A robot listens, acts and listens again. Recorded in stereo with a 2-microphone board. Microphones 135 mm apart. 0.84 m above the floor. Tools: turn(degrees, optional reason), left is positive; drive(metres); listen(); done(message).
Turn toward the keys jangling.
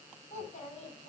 listen()
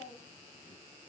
listen()
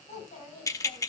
turn(degrees=25, reason="The keys jangling: about 25° left or 155° left.")
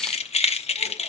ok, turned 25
turn(degrees=130, reason="So it is at 130° left.")
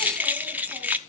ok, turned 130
turn(degrees=-10, reason="The keys jangling is now 10° right.")
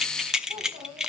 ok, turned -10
done("Found it: keys jangling, straight ahead, under 1 m away.")